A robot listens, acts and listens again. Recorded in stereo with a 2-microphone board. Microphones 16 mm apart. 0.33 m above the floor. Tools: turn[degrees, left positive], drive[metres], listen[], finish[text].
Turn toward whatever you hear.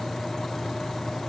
Action: listen[]
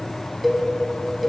Action: turn[-30]
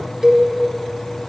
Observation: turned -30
Thought: So it is at 150° right.
Action: turn[-150]
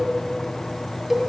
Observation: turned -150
Thought: The cowbell is now 10° right.
Action: turn[-10]
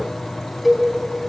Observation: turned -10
Action: finish[Facing the cowbell.]